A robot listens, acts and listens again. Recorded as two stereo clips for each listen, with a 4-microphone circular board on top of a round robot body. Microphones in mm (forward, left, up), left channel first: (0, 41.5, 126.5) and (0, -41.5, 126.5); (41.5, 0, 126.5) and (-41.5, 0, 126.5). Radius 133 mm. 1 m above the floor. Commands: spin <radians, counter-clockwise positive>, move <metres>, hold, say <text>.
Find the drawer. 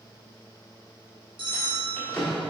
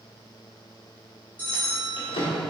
spin 0.17
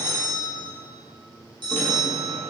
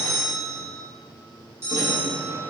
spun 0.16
hold
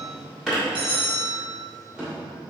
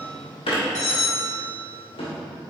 say Found it: a drawer, straight ahead.